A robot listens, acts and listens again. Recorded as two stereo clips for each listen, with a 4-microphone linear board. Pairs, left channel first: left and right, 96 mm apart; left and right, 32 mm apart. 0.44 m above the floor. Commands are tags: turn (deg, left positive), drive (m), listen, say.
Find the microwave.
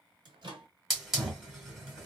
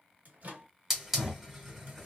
<turn deg="-55"/>
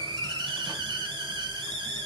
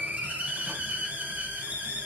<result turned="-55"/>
<listen/>
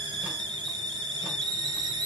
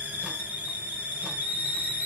<listen/>
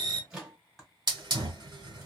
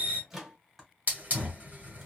<turn deg="-10"/>
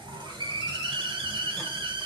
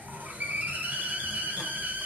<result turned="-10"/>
<listen/>
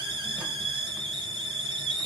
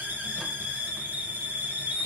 <listen/>
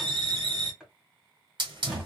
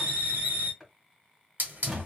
<say>I heard a microwave from this way, but can't make it out now.</say>